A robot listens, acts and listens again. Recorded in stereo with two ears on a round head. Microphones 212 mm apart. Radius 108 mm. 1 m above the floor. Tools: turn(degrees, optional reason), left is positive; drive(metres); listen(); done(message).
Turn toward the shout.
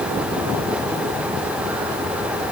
listen()
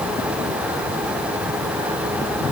listen()
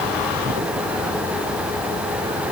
done("I can't make out a shout.")